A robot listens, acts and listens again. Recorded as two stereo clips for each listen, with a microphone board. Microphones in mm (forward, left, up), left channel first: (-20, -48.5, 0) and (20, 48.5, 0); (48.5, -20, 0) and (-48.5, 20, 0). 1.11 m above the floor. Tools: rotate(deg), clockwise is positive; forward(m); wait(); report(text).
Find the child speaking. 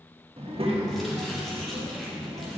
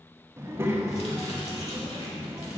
rotate(-95)
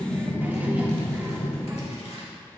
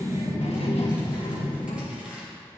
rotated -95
report("Facing the child speaking, 1 to 2 m away.")